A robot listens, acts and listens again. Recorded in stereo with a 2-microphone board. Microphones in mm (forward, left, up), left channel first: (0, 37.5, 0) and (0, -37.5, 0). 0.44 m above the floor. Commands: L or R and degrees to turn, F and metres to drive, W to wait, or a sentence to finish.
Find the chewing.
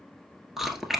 R30
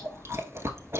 R140
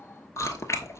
L45
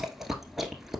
Facing the chewing.